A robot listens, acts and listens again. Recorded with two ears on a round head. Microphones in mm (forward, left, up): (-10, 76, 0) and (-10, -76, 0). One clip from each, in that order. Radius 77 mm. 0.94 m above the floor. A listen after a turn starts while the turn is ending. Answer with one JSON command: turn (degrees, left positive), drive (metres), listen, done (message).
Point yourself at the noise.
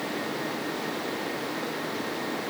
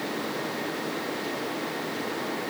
{"listen": true}
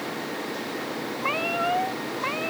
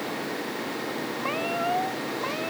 {"turn": 40}
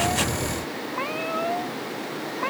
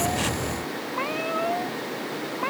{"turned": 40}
{"done": "Found it: a cat meowing, straight ahead."}